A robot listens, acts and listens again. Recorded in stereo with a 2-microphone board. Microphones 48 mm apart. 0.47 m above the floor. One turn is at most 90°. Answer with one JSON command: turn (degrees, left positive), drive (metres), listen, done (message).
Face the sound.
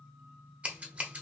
{"turn": -30}
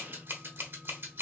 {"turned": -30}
{"turn": -90}
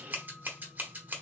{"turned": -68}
{"turn": -45}
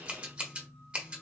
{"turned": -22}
{"turn": -25}
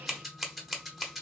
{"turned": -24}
{"done": "Found it: scissors, straight ahead."}